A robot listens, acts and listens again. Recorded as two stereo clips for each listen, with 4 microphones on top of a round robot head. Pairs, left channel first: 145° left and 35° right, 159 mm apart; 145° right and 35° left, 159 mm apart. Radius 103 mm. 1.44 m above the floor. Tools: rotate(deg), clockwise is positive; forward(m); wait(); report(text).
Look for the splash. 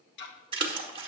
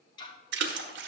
rotate(-25)
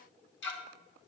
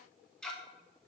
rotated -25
report("I heard a splash from this way, but can't make it out now.")